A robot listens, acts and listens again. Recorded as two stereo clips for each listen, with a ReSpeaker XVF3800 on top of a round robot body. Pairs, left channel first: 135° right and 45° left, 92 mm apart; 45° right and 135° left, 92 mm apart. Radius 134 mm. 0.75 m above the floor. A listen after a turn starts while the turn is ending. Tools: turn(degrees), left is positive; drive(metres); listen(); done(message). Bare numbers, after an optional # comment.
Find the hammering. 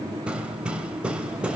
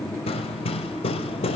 # The hammering: 35° right.
turn(-35)
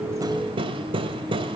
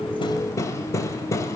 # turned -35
# The hammering is now 15° left.
turn(15)
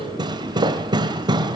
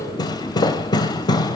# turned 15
done("Facing the hammering.")